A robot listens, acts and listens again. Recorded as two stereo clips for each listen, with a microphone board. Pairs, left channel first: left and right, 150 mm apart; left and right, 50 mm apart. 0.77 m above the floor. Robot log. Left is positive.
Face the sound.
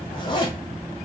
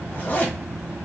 note: The zipper: about 30° left or 150° left.
cmd yaw +30
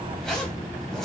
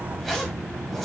end: Facing the zipper, 1 to 2 m away.